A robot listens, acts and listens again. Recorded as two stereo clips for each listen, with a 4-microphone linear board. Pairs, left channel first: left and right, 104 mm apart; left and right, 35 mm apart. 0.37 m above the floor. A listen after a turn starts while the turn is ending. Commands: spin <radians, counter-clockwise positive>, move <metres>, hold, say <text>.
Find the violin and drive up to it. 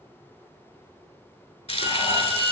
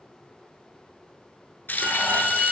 spin -0.61
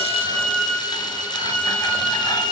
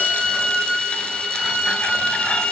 move 1.0
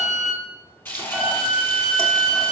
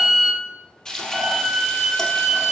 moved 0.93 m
move 1.0
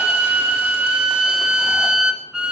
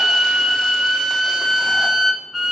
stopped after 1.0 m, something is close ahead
spin -0.17
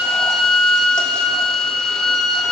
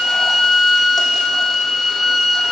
say I am next to the violin.